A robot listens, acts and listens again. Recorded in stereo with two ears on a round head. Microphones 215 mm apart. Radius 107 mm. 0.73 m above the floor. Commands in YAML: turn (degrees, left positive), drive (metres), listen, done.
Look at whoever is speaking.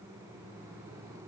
listen: true
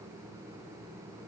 listen: true
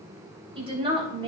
turn: -25
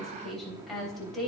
done: "Facing the woman speaking, 2 to 4 m away."